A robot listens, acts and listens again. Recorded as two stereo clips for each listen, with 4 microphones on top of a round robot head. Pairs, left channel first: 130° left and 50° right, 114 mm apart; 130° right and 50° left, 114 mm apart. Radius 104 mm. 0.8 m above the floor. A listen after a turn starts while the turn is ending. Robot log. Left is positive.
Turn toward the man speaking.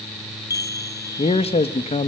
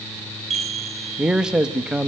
note: The man speaking: 135° left.
cmd yaw +135
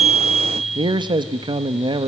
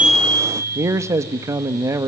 note: The man speaking is now 10° right.
cmd yaw -10
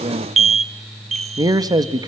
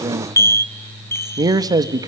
end: Found it: a man speaking, straight ahead.